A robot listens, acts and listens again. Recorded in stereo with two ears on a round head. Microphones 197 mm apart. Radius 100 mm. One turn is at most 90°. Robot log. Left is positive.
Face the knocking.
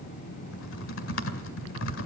cmd idle
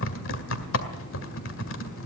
cmd idle
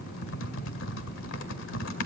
end: I can't make out knocking to turn to.